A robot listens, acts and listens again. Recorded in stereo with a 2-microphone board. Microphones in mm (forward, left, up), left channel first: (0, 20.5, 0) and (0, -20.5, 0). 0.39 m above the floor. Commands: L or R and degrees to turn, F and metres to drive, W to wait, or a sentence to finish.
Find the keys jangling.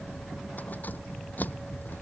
L45
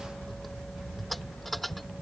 Facing the keys jangling.